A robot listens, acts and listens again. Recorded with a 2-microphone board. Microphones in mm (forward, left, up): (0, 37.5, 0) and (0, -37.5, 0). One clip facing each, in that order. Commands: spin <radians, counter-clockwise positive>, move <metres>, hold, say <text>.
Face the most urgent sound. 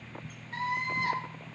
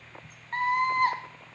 spin -0.87
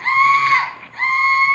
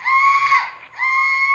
spin -0.17
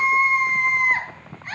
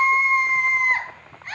say Found it: a scream, straight ahead.